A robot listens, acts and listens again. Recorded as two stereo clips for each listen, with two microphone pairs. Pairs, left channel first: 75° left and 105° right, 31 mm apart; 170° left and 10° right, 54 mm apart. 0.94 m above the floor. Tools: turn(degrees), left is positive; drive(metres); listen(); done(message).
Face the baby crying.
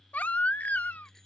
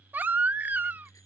turn(degrees=45)
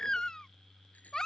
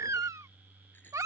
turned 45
done("Found it: a baby crying, straight ahead.")